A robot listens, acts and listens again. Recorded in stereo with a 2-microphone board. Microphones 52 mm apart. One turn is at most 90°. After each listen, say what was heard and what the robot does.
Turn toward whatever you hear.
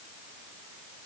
Keep listening.
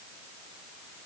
Keep listening.
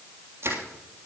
The crushing: about 50° right or 130° right. Turn 50° right.
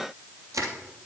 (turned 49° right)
So it is at 80° right. Turn 80° right.
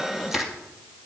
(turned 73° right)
Facing the crushing, 2 to 4 m away.